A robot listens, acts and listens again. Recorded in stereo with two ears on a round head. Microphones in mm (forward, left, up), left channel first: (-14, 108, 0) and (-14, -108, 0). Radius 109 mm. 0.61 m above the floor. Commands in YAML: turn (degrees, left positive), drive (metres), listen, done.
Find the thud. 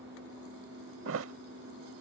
turn: -55
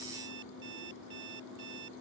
listen: true
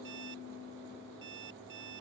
done: "I heard a thud, but can't make it out now. It was about straight ahead or 70° right."